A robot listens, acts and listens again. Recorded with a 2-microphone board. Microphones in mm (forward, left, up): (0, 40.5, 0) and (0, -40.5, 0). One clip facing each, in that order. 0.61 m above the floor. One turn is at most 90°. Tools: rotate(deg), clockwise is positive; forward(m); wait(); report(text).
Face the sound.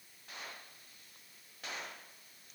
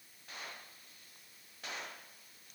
wait()
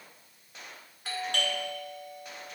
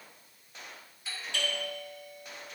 rotate(-55)
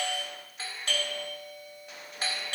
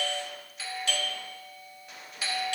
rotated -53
rotate(-50)
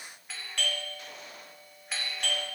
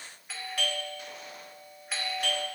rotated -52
report("Found it: a doorbell, straight ahead.")